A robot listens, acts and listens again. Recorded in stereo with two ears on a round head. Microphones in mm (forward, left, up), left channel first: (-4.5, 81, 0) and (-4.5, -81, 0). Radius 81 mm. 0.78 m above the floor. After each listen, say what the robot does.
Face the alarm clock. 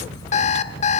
Turn 40° left.
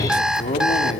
Facing the alarm clock, 1 to 2 m away.